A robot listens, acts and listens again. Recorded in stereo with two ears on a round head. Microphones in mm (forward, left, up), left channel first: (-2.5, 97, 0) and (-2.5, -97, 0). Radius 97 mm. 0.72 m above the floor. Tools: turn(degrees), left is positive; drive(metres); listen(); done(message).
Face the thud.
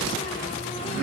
listen()
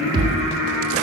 turn(degrees=-25)
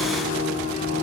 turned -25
listen()
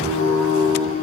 done("I heard a thud, but can't make it out now. It was about straight ahead or 130° right.")